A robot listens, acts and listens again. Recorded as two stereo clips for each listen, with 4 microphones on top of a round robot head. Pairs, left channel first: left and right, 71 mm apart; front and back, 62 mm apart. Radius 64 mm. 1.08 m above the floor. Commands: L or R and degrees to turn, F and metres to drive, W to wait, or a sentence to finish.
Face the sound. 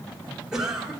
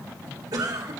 R175
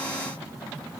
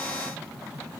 W
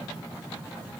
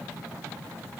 W
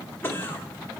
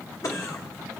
L30
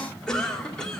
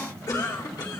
L10
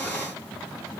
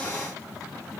W
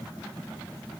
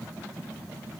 W
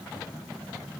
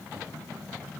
I heard a cough from this way, but can't make it out now.